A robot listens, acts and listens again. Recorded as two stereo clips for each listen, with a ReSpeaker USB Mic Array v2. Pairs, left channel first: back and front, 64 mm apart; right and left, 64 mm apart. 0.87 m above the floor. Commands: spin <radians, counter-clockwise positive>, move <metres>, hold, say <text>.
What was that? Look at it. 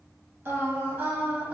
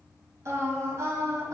spin 1.13
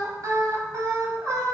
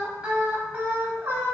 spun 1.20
spin 0.61
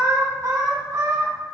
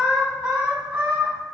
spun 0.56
spin 0.35
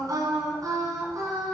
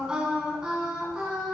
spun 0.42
spin 0.17
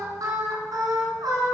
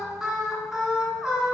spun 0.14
say Facing the singing.